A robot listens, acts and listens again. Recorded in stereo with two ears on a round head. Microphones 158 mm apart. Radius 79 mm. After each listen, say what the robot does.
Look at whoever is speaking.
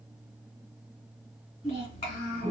Turn 35° left.
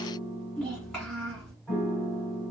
Found it: a child speaking, straight ahead, 1 to 2 m away.